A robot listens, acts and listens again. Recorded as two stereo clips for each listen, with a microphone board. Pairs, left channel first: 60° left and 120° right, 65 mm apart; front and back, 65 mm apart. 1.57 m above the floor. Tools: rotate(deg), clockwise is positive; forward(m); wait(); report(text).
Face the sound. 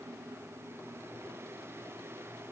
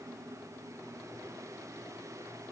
wait()
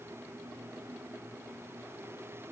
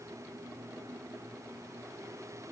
wait()
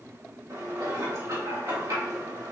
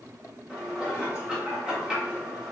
rotate(100)
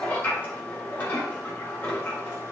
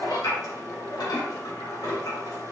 report("Facing the dishes clattering.")